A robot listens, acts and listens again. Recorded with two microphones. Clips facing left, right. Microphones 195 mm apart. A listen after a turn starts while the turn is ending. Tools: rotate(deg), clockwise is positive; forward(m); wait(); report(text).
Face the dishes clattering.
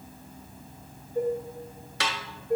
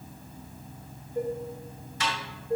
rotate(-20)
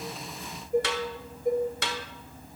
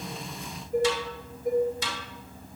report("Facing the dishes clattering.")